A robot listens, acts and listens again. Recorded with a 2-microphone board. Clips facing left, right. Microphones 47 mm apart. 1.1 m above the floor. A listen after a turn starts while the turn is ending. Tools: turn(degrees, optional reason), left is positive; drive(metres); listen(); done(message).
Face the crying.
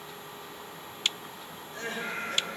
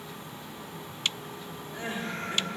turn(degrees=-15, reason="The crying: about 15° right or 165° right.")
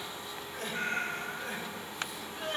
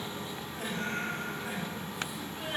done("Found it: crying, straight ahead.")